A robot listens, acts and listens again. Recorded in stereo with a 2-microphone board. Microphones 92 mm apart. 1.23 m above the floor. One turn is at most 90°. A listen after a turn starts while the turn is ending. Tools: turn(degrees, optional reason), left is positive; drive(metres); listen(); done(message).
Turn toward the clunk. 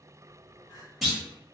turn(degrees=30)
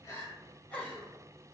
listen()
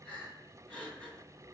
done("I heard a clunk, but can't make it out now. It was about 25° right or 145° left.")